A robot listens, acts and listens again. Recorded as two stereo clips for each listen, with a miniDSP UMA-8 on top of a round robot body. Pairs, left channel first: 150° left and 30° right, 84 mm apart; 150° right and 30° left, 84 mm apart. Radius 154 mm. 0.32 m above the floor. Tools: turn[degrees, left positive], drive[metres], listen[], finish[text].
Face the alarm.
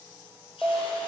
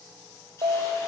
Thought: The alarm: 50° left.
Action: turn[50]
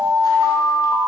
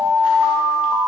Action: finish[Found it: an alarm, straight ahead, 1 to 2 m away.]